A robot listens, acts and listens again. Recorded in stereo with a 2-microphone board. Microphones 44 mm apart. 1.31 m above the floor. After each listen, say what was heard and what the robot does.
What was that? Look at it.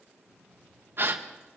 The gasp: about 50° right or 130° right. Turn 50° right.
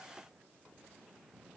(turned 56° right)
Keep listening.
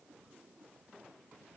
I heard a gasp, but can't make it out now. It was about 5° left or 70° right.